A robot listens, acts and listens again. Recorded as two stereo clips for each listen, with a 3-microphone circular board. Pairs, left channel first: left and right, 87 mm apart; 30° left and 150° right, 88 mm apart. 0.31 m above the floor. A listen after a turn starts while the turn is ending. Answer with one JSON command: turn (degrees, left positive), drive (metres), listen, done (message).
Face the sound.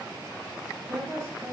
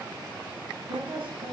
{"turn": -150}
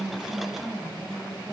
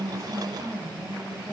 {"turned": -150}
{"turn": -20}
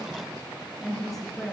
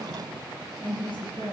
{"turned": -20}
{"done": "Facing the woman speaking."}